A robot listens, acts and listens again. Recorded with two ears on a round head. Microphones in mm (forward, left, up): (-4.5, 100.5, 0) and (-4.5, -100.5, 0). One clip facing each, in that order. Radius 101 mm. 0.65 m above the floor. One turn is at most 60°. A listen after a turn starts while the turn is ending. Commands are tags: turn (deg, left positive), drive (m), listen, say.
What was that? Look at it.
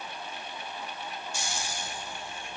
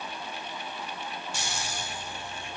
<turn deg="-55"/>
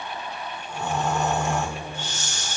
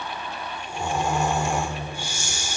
<turn deg="-10"/>
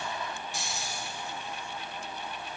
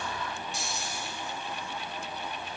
<say>Facing the snoring.</say>